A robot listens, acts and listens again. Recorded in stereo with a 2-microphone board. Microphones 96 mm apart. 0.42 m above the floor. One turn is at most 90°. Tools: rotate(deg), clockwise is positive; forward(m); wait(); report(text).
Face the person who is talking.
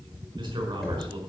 rotate(45)
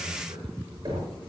wait()
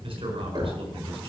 rotate(85)
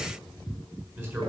rotate(25)
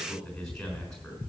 report("Facing the man speaking, over 4 m away.")